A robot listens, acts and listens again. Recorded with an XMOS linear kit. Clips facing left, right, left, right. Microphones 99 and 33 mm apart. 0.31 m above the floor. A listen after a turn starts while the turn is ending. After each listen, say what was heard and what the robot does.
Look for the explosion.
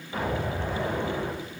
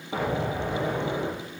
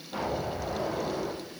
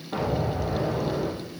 Turn 90° right.
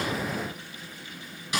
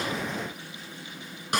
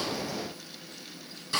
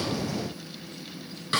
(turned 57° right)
Nothing new. It was at 35° right. Turn 35° right.
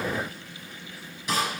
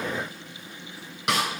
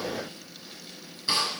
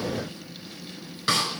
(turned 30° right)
Facing where the explosion came from. I can't hear it now.